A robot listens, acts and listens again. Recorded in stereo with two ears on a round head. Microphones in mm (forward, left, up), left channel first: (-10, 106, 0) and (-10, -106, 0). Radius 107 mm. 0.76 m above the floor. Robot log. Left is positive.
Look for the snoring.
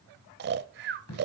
note: The snoring: about 45° right or 135° right.
cmd yaw -45
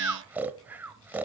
note: So it is at 10° right.
cmd yaw -10
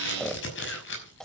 end: Found it: snoring, straight ahead.